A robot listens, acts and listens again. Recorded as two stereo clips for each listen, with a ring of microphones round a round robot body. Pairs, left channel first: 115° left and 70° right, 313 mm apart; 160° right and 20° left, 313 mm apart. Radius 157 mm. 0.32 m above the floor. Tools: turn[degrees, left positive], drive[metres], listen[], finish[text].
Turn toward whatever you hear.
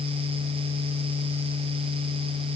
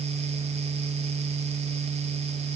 Action: listen[]
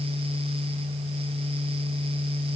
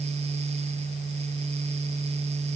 Action: listen[]
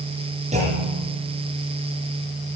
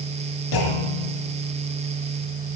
Thought: The clunk: 140° right.
Action: turn[-140]
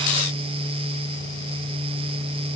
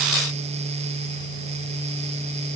Action: finish[I heard a clunk from this way, but can't make it out now.]